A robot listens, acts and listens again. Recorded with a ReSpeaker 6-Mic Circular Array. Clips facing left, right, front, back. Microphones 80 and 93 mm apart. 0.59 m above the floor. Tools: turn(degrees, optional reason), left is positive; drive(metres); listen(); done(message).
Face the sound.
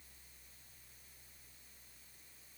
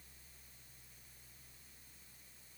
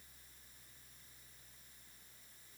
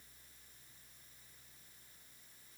listen()
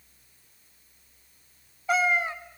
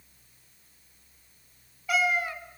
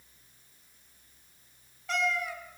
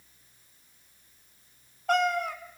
turn(degrees=150, reason="The cat meowing: 150° left.")
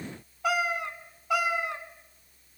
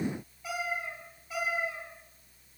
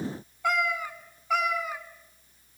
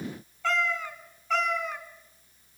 turn(degrees=85, reason="The cat meowing is now 85° left.")
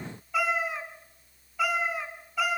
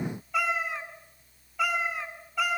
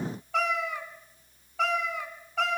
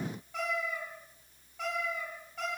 done("Facing the cat meowing, 2 to 4 m away.")